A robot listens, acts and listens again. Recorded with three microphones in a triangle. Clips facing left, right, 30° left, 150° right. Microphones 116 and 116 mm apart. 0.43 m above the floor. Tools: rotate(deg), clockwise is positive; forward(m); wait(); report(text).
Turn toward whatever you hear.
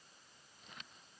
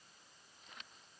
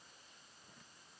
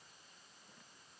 wait()
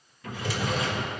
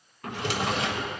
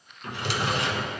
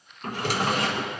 rotate(105)
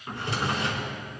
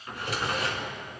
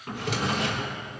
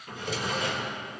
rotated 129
rotate(-25)
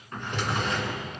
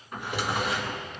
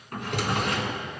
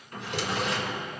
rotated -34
rotate(10)
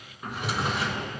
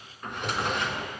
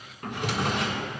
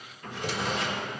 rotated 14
report("Facing the drawer, 1 to 2 m away.")